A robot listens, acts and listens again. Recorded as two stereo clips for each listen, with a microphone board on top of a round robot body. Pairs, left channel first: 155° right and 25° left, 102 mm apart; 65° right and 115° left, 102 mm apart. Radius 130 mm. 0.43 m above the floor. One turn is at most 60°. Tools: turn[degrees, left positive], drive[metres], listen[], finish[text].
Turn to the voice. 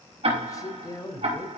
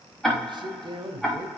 Thought: The man speaking: 150° left.
Action: turn[60]
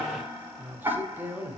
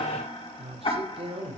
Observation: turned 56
Thought: The man speaking is now 90° left.
Action: turn[60]
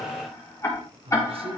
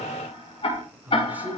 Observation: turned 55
Thought: The man speaking is now 40° left.
Action: turn[40]
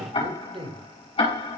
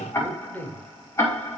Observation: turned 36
Action: finish[Facing the man speaking, 2 to 4 m away.]